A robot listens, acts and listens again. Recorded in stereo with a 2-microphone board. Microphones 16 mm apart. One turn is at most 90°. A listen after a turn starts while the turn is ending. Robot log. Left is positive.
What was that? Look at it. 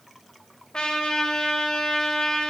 note: The trumpet: about 70° left or 110° left.
cmd yaw +70
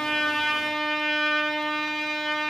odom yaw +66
note: So it is at 15° left.
cmd yaw +15
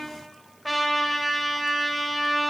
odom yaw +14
end: Found it: a trumpet, straight ahead, 2 to 4 m away.